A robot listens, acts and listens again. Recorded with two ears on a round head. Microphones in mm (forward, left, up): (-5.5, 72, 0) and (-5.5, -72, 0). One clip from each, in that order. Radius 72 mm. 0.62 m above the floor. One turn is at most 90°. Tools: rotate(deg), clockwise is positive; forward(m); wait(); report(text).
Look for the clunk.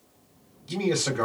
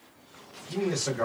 wait()
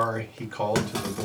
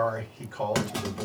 rotate(-30)
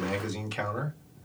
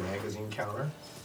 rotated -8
wait()
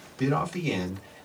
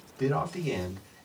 report("I heard a clunk, but can't make it out now. It was about 5° right or 170° left.")